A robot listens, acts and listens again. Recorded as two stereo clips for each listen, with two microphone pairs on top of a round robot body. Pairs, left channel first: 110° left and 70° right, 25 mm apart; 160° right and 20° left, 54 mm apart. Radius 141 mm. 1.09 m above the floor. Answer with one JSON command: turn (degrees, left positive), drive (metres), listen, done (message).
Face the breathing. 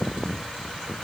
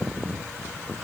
{"listen": true}
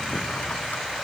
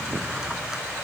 {"listen": true}
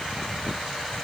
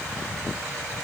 {"done": "I can't make out breathing to turn to."}